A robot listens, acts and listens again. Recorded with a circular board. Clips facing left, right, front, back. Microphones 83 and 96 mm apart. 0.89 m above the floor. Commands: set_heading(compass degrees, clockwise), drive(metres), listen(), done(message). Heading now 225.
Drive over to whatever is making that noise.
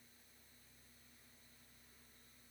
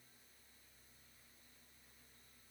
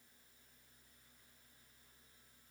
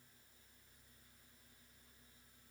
listen()
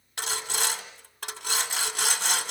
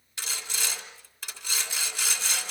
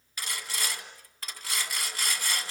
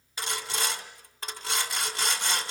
set_heading(105)
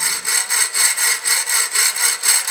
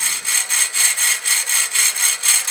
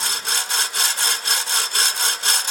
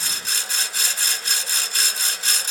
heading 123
set_heading(108)
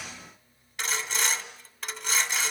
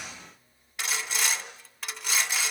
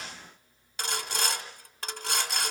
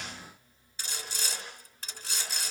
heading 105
drive(1.0)
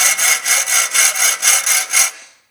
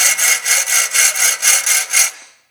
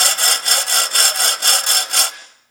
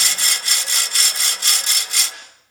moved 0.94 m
drive(1.0)
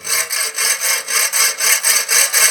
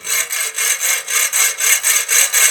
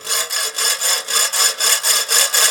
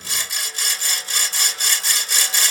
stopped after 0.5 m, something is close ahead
set_heading(95)
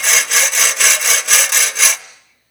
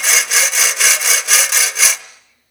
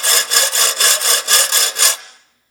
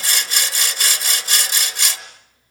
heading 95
done("Arrived at the sawing, straight ahead.")